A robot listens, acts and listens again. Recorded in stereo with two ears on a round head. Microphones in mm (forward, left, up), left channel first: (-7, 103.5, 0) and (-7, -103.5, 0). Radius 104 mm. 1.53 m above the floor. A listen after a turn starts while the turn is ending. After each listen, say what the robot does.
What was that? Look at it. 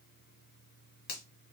Turn 45° left.
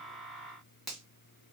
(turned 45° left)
Facing the finger snap, 1 to 2 m away.